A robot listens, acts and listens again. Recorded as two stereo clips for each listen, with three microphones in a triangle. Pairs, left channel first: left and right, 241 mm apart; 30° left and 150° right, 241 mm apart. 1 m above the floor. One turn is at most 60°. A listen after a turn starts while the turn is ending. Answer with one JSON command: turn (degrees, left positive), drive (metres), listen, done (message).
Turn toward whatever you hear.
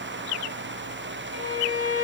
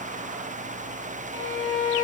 {"turn": -60}
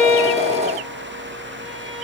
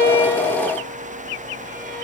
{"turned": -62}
{"turn": -60}
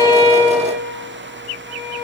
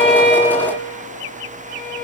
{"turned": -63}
{"turn": -10}
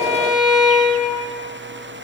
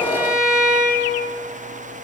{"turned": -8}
{"done": "Facing the violin."}